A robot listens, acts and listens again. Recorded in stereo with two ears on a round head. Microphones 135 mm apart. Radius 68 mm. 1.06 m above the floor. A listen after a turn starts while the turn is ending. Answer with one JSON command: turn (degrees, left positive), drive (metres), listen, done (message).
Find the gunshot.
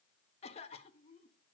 {"listen": true}
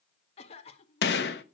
{"turn": 90}
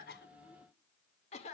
{"done": "Facing where the gunshot came from. I can't hear it now."}